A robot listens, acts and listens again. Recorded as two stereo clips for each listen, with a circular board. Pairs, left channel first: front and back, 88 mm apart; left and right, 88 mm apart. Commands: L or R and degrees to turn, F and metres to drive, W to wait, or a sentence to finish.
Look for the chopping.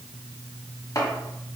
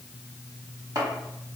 R50
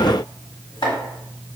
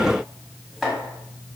Facing the chopping, 1 to 2 m away.